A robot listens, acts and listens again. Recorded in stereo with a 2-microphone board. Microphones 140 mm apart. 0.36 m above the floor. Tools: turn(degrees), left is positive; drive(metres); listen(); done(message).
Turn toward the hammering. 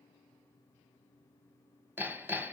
turn(degrees=-30)
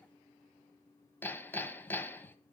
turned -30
turn(degrees=15)
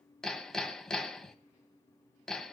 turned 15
done("Facing the hammering.")